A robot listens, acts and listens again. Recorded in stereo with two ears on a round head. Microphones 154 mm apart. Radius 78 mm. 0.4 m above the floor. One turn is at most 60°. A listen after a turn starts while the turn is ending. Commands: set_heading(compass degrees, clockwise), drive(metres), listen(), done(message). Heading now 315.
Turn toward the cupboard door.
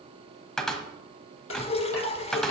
set_heading(285)
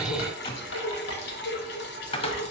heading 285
set_heading(225)
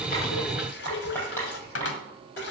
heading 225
set_heading(165)
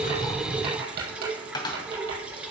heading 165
set_heading(140)
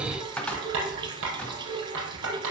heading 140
done("Found it: a cupboard door, straight ahead, 1 to 2 m away.")